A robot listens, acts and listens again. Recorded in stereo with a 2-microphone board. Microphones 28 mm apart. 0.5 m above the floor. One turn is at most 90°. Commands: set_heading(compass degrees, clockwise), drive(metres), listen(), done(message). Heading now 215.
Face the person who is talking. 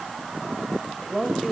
set_heading(185)
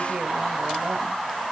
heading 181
listen()
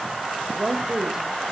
set_heading(196)
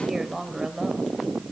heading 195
done("Found it: a woman speaking, straight ahead.")